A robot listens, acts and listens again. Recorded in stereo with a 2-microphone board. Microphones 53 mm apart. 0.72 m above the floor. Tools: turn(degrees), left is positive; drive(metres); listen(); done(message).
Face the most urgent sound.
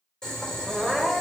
turn(degrees=-30)
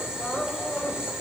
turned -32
turn(degrees=30)
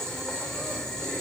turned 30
listen()
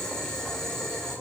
listen()
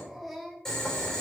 done("Found it: crying, straight ahead, 1 to 2 m away.")